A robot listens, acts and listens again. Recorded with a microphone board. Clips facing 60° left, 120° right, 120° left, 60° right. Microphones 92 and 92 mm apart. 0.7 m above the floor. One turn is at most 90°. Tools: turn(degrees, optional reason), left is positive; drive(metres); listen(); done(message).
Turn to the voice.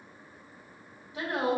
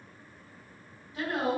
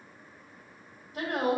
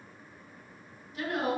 turn(degrees=90, reason="The woman speaking: 130° left.")
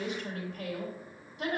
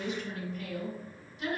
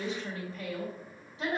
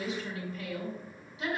turn(degrees=70, reason="The woman speaking is now 70° left.")
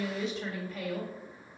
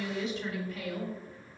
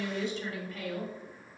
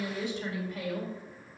turn(degrees=15, reason="The woman speaking is now 15° left.")
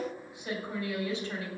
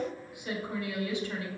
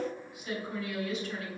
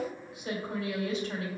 done("Found it: a woman speaking, straight ahead.")